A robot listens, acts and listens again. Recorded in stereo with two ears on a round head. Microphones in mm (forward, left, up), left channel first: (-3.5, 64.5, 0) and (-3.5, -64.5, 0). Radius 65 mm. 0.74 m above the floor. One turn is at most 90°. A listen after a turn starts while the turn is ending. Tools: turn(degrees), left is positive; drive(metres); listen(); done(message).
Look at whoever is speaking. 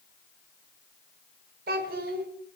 turn(degrees=-70)
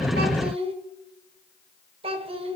turn(degrees=-40)
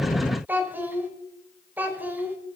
turn(degrees=-15)
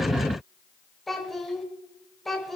done("Facing the child speaking.")